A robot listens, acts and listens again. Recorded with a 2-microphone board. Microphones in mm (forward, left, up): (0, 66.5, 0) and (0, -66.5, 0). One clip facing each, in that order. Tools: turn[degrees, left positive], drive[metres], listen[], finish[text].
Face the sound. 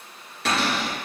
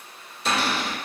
Thought: The cupboard door: about 70° left or 110° left.
Action: turn[70]
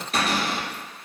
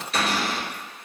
Thought: So it is at 40° left.
Action: turn[40]
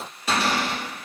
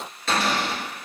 Thought: The cupboard door is now 10° left.
Action: turn[10]
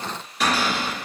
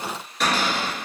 Action: finish[Facing the cupboard door.]